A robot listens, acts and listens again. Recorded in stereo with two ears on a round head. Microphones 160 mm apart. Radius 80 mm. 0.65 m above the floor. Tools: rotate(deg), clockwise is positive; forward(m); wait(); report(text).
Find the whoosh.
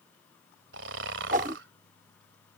rotate(45)
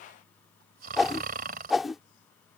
report("Facing the whoosh.")